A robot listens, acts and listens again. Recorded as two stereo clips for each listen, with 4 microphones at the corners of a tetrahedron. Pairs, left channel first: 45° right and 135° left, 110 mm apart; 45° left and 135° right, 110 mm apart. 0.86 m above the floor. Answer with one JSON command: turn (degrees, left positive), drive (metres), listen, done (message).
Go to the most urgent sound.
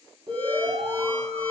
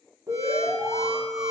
{"turn": 165}
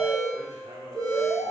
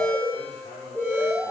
{"turn": -30}
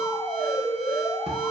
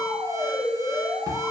{"drive": 1.0}
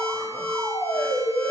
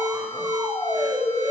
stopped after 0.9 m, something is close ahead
{"done": "Arrived at the alarm, straight ahead."}